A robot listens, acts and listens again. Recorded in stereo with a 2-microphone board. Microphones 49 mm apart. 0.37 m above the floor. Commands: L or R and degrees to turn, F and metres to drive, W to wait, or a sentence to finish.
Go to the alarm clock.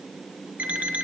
R30
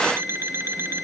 R120
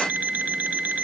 R30
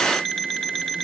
F1.0
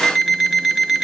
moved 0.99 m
F1.0
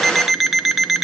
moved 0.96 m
F1.0
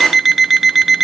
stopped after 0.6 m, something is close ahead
Arrived at the alarm clock, straight ahead.